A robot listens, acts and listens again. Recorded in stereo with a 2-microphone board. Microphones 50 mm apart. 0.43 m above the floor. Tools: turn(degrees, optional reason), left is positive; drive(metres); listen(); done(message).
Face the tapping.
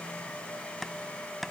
turn(degrees=30)
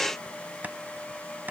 turn(degrees=-35, reason="So it is at 35° right.")
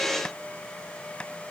turn(degrees=15, reason="The tapping is now 15° left.")
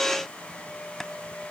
done("Found it: tapping, straight ahead.")